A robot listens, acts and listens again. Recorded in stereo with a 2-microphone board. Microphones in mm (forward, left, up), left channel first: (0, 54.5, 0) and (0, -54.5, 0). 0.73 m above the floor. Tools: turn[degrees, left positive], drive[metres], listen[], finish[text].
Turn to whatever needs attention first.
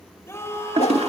Thought: The scream: about 25° left or 155° left.
Action: turn[25]
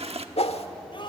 Thought: So it is at 130° left.
Action: turn[130]
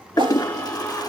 Thought: The scream is now 15° left.
Action: turn[15]
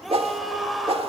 Action: finish[Facing the scream, 2 to 4 m away.]